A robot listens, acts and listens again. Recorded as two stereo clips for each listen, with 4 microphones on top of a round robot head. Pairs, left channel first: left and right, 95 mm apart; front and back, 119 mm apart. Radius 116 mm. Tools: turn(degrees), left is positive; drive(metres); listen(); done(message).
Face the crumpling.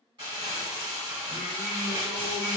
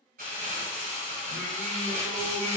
turn(degrees=-145)
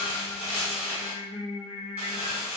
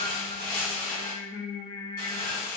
turn(degrees=-10)
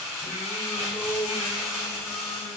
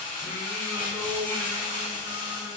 done("Facing the crumpling, 1 to 2 m away.")